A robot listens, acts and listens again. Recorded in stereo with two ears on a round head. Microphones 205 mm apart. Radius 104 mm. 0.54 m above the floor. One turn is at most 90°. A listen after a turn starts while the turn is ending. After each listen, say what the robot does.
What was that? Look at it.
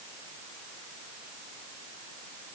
Keep listening.
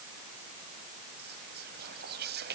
Turn 50° right.
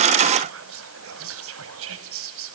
Turn 75° right.
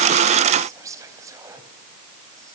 Turn 15° right.
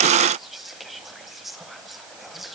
Found it: whispering, straight ahead.